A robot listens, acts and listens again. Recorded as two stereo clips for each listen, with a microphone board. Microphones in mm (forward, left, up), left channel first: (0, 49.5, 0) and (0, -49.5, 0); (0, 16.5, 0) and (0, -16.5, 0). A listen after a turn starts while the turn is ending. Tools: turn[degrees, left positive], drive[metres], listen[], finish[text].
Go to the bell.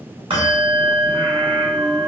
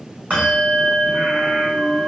Thought: The bell: about 60° right or 120° right.
Action: turn[-60]
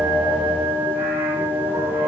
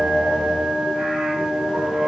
Thought: So it is at 20° right.
Action: turn[-20]
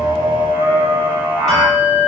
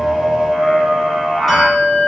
Action: drive[1.0]
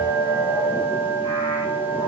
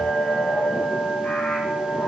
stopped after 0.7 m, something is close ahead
Action: finish[Arrived at the bell, straight ahead.]